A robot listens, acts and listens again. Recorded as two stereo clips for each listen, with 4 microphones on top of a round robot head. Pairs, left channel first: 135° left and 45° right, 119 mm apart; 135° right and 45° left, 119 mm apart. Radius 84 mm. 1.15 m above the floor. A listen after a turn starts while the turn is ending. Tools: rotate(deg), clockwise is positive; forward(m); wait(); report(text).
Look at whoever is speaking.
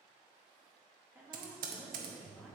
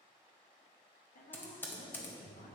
rotate(120)
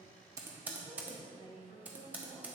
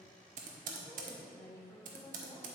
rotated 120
rotate(65)
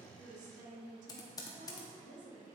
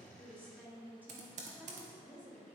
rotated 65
rotate(35)
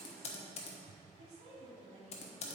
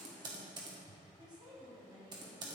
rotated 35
rotate(10)
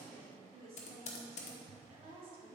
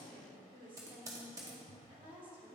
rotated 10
report("Found it: a woman speaking, straight ahead.")